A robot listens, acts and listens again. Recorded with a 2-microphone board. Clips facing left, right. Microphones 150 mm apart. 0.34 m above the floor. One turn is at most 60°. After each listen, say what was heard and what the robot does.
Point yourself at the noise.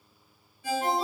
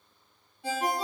The ringtone: about 70° right or 110° right. Turn 60° right.
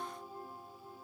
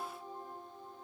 Keep listening.
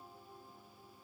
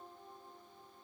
Keep listening.
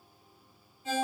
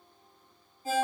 So it is at 40° right. Turn 40° right.
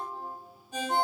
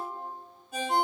Facing the ringtone.